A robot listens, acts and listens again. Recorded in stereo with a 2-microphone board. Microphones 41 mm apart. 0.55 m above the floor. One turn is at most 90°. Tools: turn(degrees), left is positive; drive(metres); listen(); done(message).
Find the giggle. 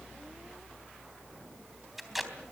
listen()
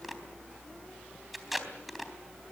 listen()
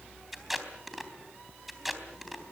done("I can't make out a giggle to turn to.")